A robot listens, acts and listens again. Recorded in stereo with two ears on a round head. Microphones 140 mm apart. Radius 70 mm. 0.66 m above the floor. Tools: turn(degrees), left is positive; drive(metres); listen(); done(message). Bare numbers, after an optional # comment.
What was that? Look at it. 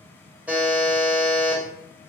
turn(-30)
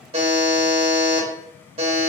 # So it is at 140° right.
turn(-140)
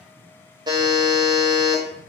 # The buzzer is now 30° right.
turn(-30)
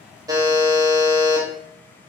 # The buzzer is now 25° right.
turn(-25)
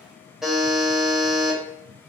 done("Facing the buzzer, under 1 m away.")